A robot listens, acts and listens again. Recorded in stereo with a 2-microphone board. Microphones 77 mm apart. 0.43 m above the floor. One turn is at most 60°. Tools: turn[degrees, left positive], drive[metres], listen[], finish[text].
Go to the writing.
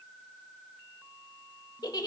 Action: listen[]
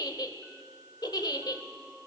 Action: listen[]
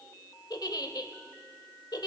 Action: finish[I can't make out writing, only a giggle.]